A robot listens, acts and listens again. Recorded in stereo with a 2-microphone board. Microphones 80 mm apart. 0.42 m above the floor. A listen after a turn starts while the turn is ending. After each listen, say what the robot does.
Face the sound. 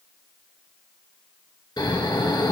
Turn 60° left.
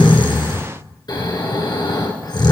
Turn 55° left.
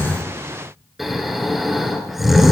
Facing the snoring.